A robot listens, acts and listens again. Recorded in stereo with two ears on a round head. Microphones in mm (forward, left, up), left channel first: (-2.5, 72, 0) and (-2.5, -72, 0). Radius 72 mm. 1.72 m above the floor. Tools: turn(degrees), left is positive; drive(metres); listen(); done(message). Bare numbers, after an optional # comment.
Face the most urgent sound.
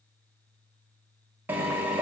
listen()
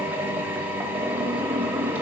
listen()
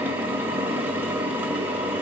done("I can't make out anything urgent, only a drill.")